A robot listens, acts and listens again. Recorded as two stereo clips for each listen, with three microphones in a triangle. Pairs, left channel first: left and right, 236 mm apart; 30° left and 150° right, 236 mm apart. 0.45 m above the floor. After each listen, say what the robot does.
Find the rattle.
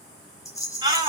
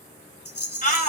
Turn 15° left.
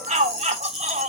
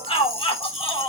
Facing the rattle.